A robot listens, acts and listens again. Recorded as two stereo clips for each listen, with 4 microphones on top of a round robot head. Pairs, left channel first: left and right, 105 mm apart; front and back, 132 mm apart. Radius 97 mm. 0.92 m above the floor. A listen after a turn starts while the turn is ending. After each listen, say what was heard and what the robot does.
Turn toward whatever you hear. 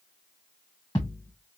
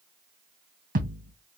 The thud: 165° left. Turn 165° left.
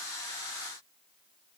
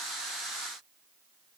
Facing where the thud came from. I can't hear it now.